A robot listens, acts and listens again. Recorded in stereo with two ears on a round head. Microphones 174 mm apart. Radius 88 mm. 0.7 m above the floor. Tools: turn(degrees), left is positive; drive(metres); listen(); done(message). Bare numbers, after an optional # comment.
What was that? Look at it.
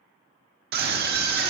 # The scream: about 55° right or 125° right.
turn(-55)
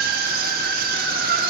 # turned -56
# So it is at 55° right.
turn(-55)
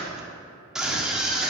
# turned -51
done("Facing the scream, 1 to 2 m away.")